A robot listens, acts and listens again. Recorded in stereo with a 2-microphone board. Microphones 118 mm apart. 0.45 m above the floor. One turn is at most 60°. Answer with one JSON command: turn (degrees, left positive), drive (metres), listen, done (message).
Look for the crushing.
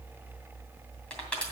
{"turn": 30}
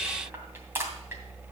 {"turn": -20}
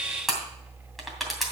{"done": "Found it: crushing, straight ahead."}